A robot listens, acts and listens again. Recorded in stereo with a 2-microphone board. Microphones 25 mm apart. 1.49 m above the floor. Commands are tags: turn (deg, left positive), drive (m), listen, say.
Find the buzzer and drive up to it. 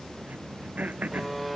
<turn deg="30"/>
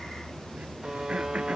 <turn deg="-30"/>
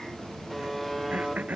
<drive m="1.0"/>
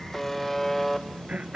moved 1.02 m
<drive m="1.0"/>
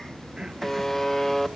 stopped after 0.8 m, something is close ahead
<turn deg="10"/>
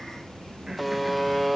<say>Arrived at the buzzer, straight ahead.</say>